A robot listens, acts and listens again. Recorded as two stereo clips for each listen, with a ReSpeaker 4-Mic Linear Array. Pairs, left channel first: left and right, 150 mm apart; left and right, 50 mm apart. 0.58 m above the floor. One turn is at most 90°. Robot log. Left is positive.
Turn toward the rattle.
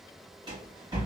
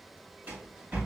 note: The rattle: about 30° right or 150° right.
cmd yaw -30
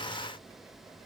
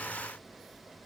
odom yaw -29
cmd idle
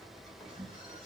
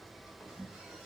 end: Facing the rattle.